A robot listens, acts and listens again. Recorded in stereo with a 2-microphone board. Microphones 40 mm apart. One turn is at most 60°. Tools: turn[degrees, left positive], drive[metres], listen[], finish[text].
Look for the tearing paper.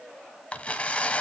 Thought: The tearing paper: about 30° left or 150° left.
Action: turn[30]
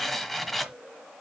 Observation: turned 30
Action: finish[Facing the tearing paper.]